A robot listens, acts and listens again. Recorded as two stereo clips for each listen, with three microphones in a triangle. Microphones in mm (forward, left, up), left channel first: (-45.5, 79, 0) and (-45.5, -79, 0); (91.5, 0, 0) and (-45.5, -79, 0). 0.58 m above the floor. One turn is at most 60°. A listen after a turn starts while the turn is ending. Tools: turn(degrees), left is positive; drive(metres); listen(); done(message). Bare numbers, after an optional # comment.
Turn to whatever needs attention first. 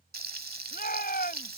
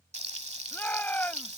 # The shout: 110° left.
turn(60)
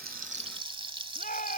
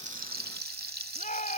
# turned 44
# The shout is now 65° left.
turn(60)
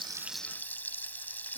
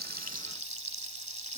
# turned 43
# Nothing new. It was at 20° left.
turn(20)
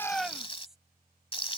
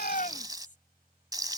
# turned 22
listen()
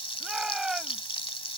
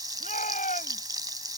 done("Found it: a shout, straight ahead.")